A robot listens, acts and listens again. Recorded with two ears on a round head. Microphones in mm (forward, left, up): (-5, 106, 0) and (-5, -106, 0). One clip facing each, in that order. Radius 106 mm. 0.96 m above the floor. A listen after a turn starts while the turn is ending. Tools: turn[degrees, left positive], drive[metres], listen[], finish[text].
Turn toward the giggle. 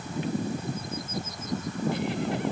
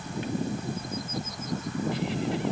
Action: listen[]
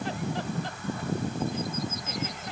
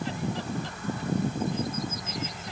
Action: listen[]
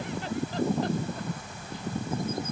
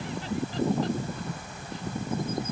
Action: finish[I can't make out a giggle to turn to.]